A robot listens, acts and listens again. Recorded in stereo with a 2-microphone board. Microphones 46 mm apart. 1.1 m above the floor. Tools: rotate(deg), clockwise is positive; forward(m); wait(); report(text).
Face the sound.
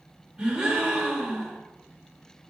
rotate(15)
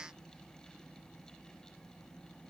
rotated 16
wait()
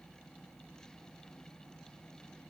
report("I heard a gasp, but can't make it out now. It was about straight ahead or 150° right.")